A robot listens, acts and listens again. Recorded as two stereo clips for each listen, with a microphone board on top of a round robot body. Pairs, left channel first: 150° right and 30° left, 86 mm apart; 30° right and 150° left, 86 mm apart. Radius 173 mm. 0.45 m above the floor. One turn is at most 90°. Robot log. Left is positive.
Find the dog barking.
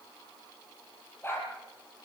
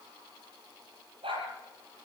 note: The dog barking: 150° left.
cmd yaw +90
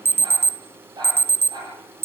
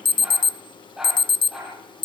note: The dog barking is now 65° left.
cmd yaw +65
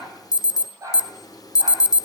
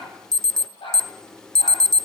note: The dog barking is now 25° right.
cmd yaw -25
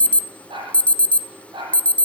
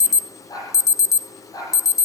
note: The dog barking is now 15° left.
cmd yaw +15
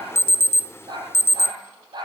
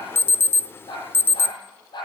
end: Facing the dog barking.